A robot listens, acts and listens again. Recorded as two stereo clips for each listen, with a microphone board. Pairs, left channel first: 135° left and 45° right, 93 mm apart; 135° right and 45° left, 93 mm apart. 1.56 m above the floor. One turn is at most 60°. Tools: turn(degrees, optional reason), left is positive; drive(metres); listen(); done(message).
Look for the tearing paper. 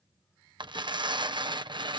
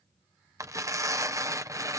turn(degrees=-10, reason="The tearing paper: 10° right.")
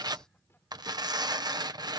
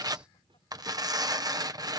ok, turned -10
done("Facing the tearing paper.")